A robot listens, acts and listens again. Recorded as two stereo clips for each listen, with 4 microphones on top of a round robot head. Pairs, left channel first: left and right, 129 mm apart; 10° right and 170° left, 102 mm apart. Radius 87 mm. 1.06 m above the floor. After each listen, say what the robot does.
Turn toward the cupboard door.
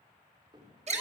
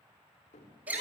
Turn 25° right.
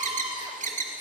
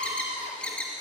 Keep listening.
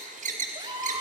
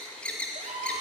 Keep listening.
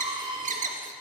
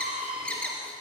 Facing where the cupboard door came from. I can't hear it now.